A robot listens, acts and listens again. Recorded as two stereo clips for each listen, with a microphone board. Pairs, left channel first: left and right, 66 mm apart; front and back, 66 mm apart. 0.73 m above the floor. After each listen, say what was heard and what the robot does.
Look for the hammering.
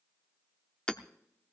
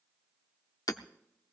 The hammering: 10° left. Turn 10° left.
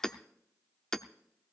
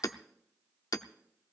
Facing the hammering, under 1 m away.